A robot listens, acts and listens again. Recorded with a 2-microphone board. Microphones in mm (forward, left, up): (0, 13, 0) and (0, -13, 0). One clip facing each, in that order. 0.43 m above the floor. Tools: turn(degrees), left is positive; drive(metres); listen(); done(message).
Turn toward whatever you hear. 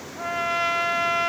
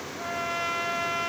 turn(degrees=25)
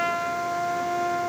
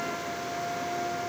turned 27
turn(degrees=130)
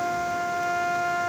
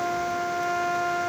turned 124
done("Found it: a trumpet, straight ahead.")